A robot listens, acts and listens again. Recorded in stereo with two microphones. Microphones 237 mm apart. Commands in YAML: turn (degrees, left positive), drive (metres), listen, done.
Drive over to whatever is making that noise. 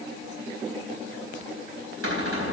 turn: -90
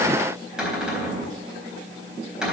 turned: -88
drive: 1.0
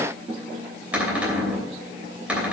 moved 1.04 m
drive: 1.0
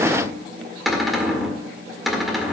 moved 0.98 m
drive: 1.0
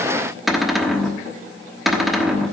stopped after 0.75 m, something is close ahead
done: "Arrived at the cupboard door, straight ahead."